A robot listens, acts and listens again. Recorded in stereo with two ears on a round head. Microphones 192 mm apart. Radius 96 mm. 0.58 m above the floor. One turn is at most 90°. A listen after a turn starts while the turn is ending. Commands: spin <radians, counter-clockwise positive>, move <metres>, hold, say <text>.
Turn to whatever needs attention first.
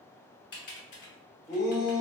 spin 0.52
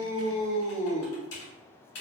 spin 1.57
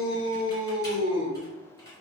spin 1.13
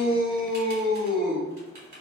say Facing the shout, 1 to 2 m away.